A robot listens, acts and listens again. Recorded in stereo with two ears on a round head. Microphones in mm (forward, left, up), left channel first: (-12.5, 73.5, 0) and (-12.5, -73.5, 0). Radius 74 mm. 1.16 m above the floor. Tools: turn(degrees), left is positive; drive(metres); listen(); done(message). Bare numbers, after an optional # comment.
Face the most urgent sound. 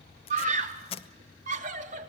# The scream: about 50° right or 130° right.
turn(-50)
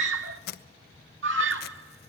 # So it is at 80° right.
turn(-80)
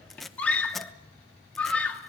# The scream is now 10° left.
turn(10)
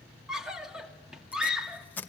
done("Found it: a scream, straight ahead, 2 to 4 m away.")